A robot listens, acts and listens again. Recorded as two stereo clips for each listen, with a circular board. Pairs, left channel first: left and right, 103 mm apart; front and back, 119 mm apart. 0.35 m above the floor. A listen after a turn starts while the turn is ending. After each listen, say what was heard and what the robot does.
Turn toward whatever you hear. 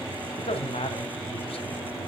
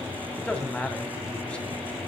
The man speaking: 80° left. Turn 80° left.
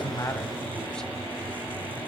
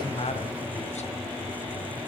Keep listening.
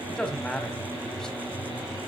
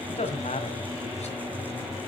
Facing the man speaking, 1 to 2 m away.